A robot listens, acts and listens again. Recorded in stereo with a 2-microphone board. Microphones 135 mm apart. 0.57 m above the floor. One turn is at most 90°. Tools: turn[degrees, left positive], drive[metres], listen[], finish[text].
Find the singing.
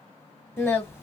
Thought: The singing: about 20° left or 160° left.
Action: turn[20]
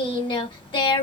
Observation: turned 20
Thought: So it is at 140° left.
Action: turn[90]
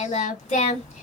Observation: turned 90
Thought: The singing is now 60° left.
Action: turn[60]
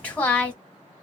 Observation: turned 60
Thought: The singing is now 10° left.
Action: turn[10]
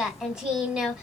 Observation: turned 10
Action: finish[Facing the singing.]